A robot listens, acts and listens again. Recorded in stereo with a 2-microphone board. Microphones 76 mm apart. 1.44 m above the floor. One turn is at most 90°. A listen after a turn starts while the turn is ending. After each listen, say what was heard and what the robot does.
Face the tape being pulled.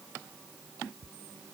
Keep listening.
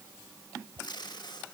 Turn 90° left.
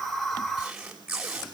So it is at 10° right. Turn 10° right.
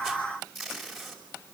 Found it: tape being pulled, straight ahead, over 4 m away.